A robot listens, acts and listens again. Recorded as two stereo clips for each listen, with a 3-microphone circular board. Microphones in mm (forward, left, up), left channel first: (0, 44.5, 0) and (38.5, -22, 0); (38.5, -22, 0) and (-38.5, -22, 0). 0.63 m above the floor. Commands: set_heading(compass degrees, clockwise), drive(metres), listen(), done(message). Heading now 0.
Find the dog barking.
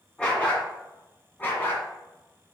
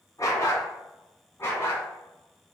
set_heading(305)
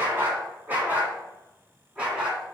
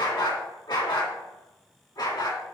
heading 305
set_heading(290)
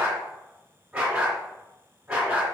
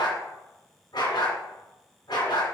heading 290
set_heading(280)
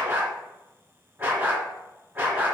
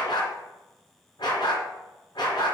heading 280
done("Facing the dog barking, 2 to 4 m away.")